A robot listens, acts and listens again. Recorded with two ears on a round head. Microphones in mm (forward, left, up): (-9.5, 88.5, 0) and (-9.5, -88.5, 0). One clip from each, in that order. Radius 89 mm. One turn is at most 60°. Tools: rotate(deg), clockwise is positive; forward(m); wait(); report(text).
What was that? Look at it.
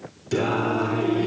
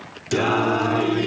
rotate(35)
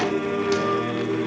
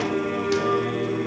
report("Found it: singing, straight ahead, 1 to 2 m away.")